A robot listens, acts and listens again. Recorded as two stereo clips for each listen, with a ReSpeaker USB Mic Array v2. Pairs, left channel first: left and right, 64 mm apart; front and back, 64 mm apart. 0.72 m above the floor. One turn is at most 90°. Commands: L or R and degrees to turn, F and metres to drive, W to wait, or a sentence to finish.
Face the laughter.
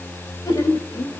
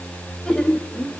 L85
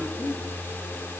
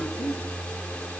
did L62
L30
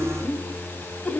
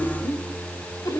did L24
L15
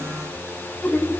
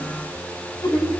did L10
L15
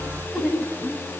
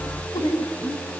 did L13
Facing the laughter.